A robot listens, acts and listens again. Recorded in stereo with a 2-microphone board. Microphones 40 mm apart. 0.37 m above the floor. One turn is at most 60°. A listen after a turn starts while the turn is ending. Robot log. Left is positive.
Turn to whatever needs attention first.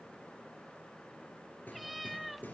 cmd idle
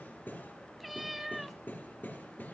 cmd idle
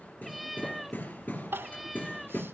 note: The crying: about 70° right or 110° right.
cmd yaw -60
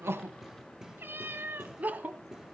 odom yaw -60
note: So it is at 45° right.
cmd yaw -45
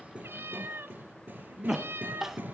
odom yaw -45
end: Facing the crying.